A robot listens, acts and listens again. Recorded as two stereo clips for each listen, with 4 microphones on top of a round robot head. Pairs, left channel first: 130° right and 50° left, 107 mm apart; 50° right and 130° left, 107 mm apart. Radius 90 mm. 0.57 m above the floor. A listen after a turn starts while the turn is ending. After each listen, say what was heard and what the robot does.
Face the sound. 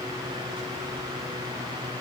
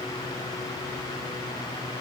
Keep listening.
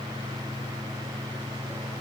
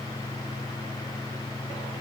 Keep listening.
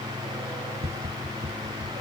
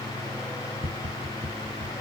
The tapping: 80° left. Turn 80° left.
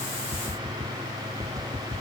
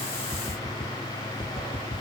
The tapping is now 15° right. Turn 15° right.
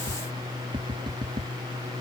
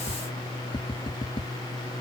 Found it: tapping, straight ahead.